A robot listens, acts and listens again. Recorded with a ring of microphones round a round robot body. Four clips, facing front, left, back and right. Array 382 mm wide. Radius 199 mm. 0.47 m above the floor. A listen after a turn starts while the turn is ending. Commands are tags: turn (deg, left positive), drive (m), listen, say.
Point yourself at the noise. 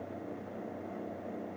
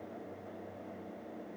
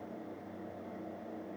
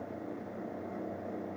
<listen/>
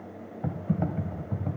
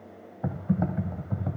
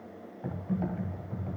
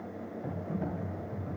<turn deg="55"/>
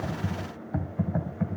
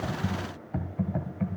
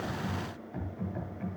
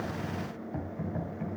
<turn deg="30"/>
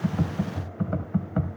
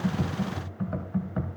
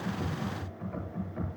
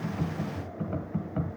<turn deg="10"/>
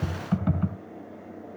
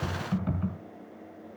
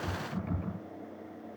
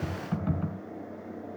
<say>Facing the typing on a keyboard, 2 to 4 m away.</say>